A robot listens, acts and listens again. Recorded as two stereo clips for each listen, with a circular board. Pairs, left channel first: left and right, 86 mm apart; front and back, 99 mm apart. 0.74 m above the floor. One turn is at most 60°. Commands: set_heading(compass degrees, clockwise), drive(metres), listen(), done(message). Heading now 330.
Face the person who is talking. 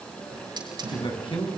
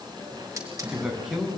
set_heading(270)
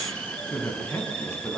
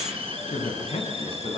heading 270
set_heading(240)
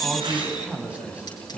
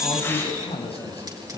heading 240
set_heading(255)
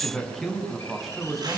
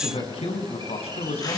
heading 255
done("Found it: a man speaking, straight ahead.")